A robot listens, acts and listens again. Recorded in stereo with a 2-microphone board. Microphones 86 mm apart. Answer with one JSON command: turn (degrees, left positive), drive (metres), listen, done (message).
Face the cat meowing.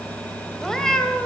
{"turn": 30}
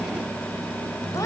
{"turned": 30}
{"listen": true}
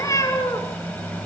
{"turn": 145}
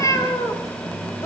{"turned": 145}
{"turn": 40}
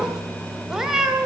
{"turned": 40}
{"done": "Found it: a cat meowing, straight ahead."}